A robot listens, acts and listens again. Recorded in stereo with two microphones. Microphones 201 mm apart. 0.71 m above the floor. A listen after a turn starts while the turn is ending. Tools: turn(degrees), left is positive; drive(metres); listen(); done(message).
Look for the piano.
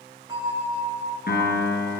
turn(degrees=50)
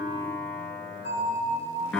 done("Found it: a piano, straight ahead, 2 to 4 m away.")